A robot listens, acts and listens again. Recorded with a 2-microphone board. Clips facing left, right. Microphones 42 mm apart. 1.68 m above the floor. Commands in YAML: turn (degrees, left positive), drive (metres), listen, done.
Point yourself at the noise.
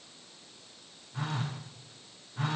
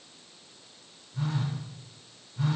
turn: 65
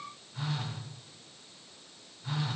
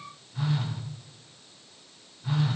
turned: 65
done: "Found it: a phone buzzing, straight ahead, 2 to 4 m away."